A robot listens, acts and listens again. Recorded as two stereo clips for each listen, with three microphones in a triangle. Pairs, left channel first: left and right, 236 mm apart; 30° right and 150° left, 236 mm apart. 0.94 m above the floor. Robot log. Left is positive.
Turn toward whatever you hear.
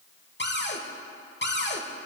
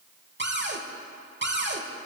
note: The cupboard door: 120° left.
cmd yaw +120
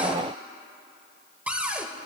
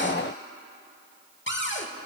end: Found it: a cupboard door, straight ahead.